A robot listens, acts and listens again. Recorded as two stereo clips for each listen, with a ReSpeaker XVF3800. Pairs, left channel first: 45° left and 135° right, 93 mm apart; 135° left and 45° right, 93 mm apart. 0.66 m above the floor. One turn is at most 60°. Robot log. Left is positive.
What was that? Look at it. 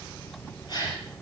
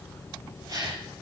end: Found it: a gasp, straight ahead.